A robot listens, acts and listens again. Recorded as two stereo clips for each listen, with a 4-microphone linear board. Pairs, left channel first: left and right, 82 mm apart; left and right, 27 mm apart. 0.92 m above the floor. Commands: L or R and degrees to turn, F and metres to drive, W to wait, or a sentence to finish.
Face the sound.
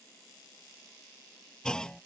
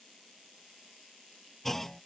L30
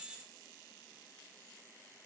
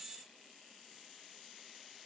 W
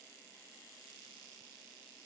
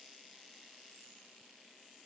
I heard a clunk, but can't make it out now. It was about 20° right or 140° left.